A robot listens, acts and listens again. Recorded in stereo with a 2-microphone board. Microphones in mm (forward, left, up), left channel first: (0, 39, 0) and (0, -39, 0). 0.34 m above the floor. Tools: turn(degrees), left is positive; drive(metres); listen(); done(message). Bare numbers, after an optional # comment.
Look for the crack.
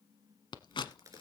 # The crack: about 45° right or 135° right.
turn(-45)
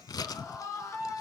listen()
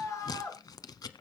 done("I heard a crack, but can't make it out now. It was about straight ahead or 90° right.")